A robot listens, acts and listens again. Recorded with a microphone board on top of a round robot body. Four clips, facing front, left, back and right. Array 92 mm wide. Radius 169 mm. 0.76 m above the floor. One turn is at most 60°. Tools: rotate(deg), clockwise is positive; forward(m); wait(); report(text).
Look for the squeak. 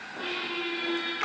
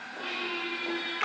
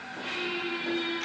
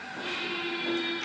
rotate(-15)
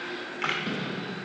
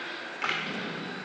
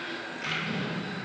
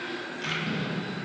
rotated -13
report("Found it: a squeak, straight ahead.")